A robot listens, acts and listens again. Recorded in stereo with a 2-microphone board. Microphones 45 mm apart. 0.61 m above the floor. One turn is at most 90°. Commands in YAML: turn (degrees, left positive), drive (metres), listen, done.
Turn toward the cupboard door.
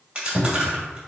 turn: -25
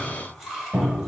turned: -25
turn: -90
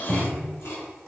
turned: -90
turn: -25
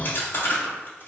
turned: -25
listen: true
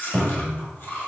done: "Facing the cupboard door, 1 to 2 m away."